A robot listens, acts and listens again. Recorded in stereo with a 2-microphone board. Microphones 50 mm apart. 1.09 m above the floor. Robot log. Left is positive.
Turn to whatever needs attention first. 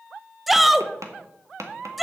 cmd yaw -30
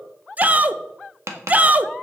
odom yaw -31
note: So it is at 145° right.
cmd yaw -145
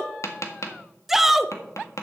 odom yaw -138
end: Facing the shout.